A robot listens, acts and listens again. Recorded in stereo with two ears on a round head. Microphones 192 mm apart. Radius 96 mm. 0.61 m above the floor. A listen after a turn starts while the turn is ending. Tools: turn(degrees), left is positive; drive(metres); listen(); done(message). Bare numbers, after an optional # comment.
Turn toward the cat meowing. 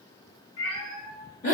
turn(90)
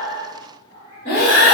# So it is at 30° left.
turn(30)
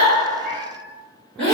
listen()
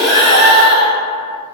listen()
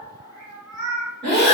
done("Found it: a cat meowing, straight ahead.")